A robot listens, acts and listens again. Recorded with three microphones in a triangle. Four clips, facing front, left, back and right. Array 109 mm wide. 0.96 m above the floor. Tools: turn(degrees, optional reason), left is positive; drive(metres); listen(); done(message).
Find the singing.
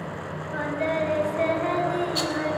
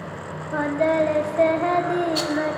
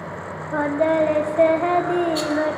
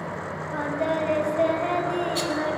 turn(degrees=160, reason="The singing: 160° left.")
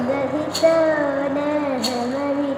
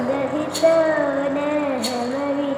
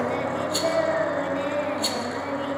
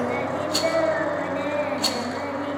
turn(degrees=40, reason="The singing is now 40° left.")
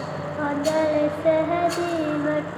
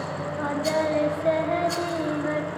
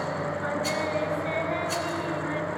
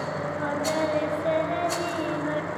turn(degrees=15, reason="The singing is now 15° left.")
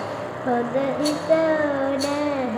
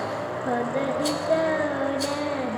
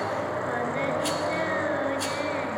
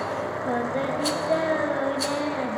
done("Found it: singing, straight ahead, under 1 m away.")